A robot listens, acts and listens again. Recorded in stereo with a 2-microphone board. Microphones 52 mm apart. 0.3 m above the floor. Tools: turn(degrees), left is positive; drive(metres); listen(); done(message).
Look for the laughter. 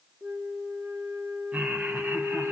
turn(degrees=-35)
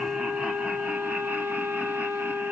listen()
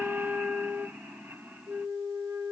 turn(degrees=-45)
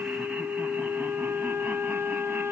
listen()
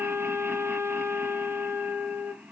turn(degrees=-20)
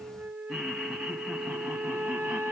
done("Facing the laughter, 2 to 4 m away.")